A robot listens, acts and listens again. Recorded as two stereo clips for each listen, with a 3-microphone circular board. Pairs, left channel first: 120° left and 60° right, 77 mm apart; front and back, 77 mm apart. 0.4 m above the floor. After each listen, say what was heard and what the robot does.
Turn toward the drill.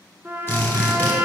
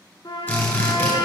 The drill: 65° left. Turn 65° left.
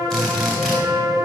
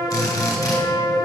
The drill is now 35° left. Turn 35° left.
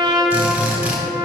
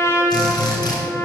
The drill is now 10° left. Turn 10° left.
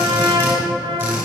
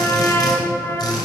Found it: a drill, straight ahead.